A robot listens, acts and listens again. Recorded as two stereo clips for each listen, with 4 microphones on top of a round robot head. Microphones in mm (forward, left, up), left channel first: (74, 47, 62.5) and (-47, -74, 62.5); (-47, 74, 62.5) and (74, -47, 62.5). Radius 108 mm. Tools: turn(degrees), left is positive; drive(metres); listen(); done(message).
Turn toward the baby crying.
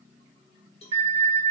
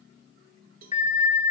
listen()
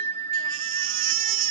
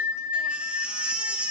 turn(degrees=-130)
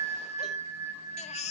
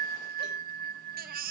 turn(degrees=-10)
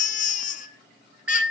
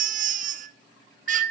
done("Found it: a baby crying, straight ahead, 1 to 2 m away.")